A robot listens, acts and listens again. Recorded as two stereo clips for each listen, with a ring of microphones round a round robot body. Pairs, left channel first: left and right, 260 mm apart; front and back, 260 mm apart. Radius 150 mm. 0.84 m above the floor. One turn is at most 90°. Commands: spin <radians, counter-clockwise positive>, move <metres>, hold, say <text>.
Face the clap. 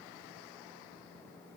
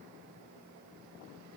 hold
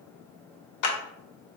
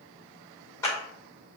spin 1.40
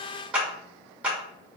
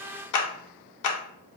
say Facing the clap.